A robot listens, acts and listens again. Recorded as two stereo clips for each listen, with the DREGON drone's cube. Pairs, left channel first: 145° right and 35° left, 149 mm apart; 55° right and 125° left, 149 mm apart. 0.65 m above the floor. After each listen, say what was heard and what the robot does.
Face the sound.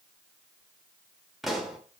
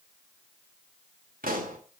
The pop: 125° left. Turn 125° left.
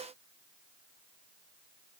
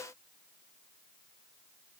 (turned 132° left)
Nothing new. It was at 10° right. Turn 10° right.
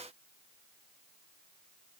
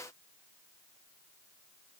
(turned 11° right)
Facing where the pop came from. I can't hear it now.